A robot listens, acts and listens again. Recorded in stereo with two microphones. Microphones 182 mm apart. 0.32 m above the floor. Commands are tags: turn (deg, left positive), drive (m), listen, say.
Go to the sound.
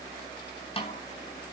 <turn deg="30"/>
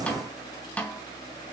<turn deg="10"/>
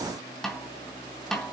<drive m="1.0"/>
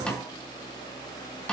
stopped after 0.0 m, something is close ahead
<say>Blocked. The snare drum is further on, straight ahead.</say>